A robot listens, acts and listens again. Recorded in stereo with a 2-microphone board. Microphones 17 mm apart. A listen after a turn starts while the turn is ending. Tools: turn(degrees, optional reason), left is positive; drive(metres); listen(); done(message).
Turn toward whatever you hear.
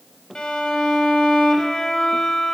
turn(degrees=55, reason="The violin: about 55° left or 125° left.")
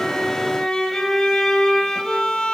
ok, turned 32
turn(degrees=65, reason="So it is at 65° left.")
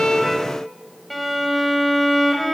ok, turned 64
done("Found it: a violin, straight ahead, 1 to 2 m away.")